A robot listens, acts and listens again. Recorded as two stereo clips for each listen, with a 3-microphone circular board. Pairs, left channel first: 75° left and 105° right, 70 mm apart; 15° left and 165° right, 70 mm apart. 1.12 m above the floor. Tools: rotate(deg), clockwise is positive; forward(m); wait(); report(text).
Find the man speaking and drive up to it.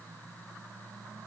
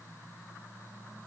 wait()
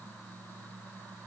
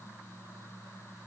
wait()
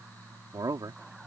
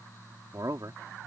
rotate(130)
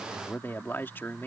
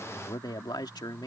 rotate(-20)
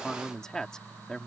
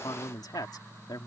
forward(1.0)
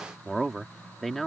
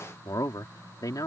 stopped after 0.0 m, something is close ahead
rotate(10)
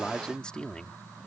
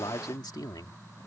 report("Blocked. The man speaking is further on, straight ahead.")